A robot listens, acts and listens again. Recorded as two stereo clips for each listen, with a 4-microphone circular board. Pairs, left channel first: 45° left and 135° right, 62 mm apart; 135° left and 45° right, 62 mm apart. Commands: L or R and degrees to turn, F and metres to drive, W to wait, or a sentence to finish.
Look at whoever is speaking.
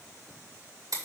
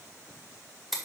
W
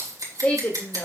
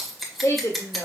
L105
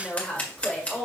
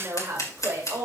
R30
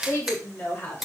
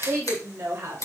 R10
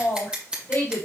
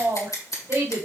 Found it: a woman speaking, straight ahead.